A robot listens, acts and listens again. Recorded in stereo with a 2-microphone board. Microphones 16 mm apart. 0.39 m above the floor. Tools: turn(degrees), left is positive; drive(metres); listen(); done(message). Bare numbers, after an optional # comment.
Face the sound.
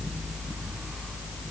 listen()
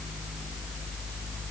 listen()
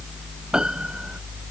# The piano: about 60° right or 120° right.
turn(-60)
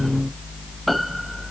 done("Found it: a piano, straight ahead.")